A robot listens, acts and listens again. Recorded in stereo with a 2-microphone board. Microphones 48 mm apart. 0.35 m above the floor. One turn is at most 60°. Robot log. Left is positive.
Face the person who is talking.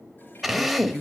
cmd yaw +30
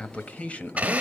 note: So it is at 145° left.
cmd yaw +60
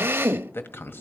note: The man speaking is now 80° left.
cmd yaw +60
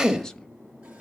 note: The man speaking is now 15° left.
cmd yaw +15
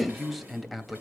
end: Found it: a man speaking, straight ahead.